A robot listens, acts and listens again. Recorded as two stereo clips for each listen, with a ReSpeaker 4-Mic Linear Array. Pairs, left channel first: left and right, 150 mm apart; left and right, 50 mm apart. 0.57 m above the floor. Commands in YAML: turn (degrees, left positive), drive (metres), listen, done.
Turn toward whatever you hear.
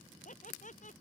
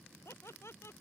turn: 55
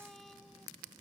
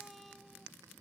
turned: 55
listen: true
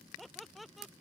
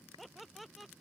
done: "Found it: laughter, straight ahead."